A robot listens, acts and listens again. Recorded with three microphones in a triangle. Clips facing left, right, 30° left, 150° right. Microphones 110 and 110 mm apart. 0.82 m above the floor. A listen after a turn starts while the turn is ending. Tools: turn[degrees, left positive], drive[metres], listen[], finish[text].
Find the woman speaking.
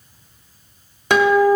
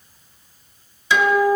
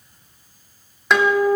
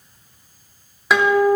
Action: listen[]
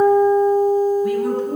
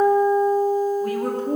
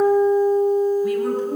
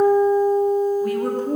Thought: The woman speaking: 130° right.
Action: turn[-130]
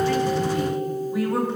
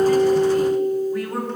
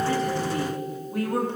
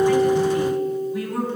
Action: finish[Facing the woman speaking, 2 to 4 m away.]